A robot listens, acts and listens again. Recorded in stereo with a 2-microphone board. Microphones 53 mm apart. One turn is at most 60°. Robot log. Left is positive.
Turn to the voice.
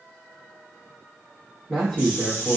cmd yaw +30
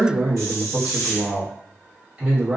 note: So it is at 20° right.
cmd yaw -20
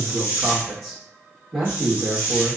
end: Found it: a man speaking, straight ahead, 1 to 2 m away.